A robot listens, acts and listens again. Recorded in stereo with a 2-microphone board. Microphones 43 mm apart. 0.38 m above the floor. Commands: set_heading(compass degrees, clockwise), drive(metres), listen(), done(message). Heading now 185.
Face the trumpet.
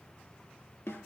listen()
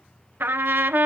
set_heading(245)
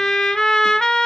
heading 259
set_heading(244)
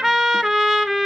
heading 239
done("Facing the trumpet.")